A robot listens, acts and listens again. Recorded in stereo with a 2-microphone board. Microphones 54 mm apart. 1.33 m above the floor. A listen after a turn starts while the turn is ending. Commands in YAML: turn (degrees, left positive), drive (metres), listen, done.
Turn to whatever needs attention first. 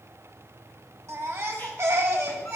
turn: -55
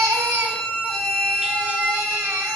turn: -70
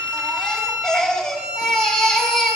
turn: 10
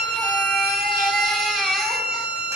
done: "Facing the baby crying."